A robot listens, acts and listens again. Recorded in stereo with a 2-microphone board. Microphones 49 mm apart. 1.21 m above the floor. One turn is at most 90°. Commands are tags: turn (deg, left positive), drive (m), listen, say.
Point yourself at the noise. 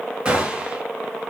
<turn deg="-20"/>
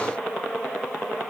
<listen/>
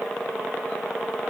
<say>I heard a gunshot, but can't make it out now. It was about straight ahead or 140° right.</say>